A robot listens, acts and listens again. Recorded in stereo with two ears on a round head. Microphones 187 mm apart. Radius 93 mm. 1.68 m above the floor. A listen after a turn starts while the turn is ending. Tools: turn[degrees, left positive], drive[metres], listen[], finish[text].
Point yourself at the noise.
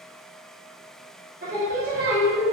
Thought: The singing: about 60° right or 120° right.
Action: turn[-60]
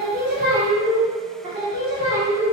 Thought: So it is at 15° right.
Action: turn[-15]
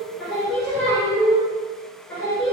Thought: The singing is now 10° left.
Action: turn[10]
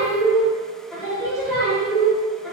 Action: finish[Found it: singing, straight ahead.]